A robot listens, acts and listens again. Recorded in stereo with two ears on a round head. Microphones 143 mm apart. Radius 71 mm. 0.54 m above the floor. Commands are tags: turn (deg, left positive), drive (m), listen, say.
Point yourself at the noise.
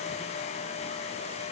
<listen/>
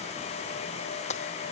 <turn deg="45"/>
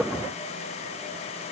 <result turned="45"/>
<listen/>
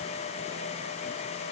<say>I heard breaking glass, but can't make it out now. It was about straight ahead or 90° left.</say>